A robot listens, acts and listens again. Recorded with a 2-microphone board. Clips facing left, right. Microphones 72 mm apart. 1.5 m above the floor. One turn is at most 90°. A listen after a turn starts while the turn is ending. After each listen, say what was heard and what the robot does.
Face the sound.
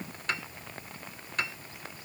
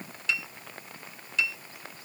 The piano: about 50° left or 130° left. Turn 50° left.
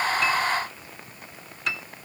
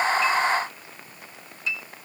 So it is at 75° left. Turn 75° left.
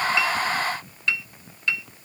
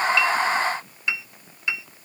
The piano is now 15° right. Turn 15° right.
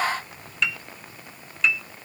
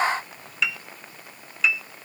Facing the piano.